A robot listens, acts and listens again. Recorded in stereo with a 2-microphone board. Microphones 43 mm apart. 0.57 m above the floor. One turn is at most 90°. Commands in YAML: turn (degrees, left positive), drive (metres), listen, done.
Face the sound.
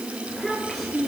turn: 30
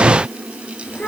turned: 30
turn: 90
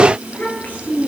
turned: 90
turn: 40
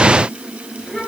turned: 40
turn: 15
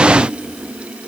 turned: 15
done: "Facing the child speaking."